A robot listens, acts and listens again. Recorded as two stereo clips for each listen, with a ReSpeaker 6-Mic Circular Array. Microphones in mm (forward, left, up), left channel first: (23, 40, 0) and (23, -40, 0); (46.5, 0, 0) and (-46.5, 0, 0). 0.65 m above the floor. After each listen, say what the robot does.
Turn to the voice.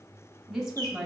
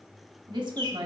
Turn 175° right.
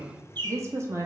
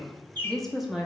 Turn 100° right.
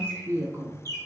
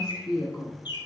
Turn 45° right.
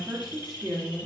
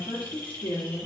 Turn 10° right.
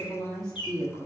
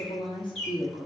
Facing the woman speaking.